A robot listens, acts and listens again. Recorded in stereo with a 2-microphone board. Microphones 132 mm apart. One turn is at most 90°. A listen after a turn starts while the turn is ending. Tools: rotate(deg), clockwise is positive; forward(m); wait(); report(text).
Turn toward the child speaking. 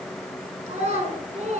rotate(55)
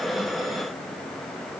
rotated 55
wait()
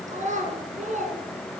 rotate(70)
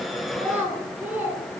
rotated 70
rotate(15)
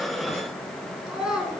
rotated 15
report("Facing the child speaking, over 4 m away.")